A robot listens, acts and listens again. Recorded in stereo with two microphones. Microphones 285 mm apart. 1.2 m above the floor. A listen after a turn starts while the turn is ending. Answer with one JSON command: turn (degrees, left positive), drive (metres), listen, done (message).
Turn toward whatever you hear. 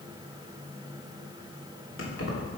{"turn": 55}
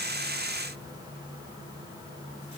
{"listen": true}
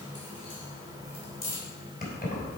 {"turn": 35}
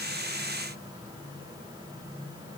{"listen": true}
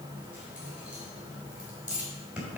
{"done": "Found it: keys jangling, straight ahead, 2 to 4 m away."}